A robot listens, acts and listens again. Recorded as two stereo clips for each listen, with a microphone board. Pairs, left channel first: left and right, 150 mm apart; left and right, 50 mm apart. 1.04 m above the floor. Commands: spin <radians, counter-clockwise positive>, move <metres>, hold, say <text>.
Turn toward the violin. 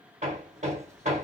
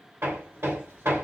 hold
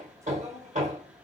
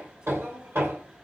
hold
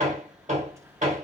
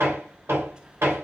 say I can't make out a violin, only hammering.